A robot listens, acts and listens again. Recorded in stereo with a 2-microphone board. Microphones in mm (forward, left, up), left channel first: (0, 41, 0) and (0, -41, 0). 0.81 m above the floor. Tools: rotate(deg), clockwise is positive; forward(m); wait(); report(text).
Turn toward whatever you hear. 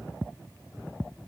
wait()
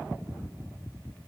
wait()
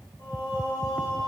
rotate(-75)
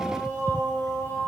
rotate(-30)
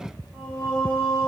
rotate(-15)
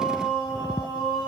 report("Found it: singing, straight ahead, over 4 m away.")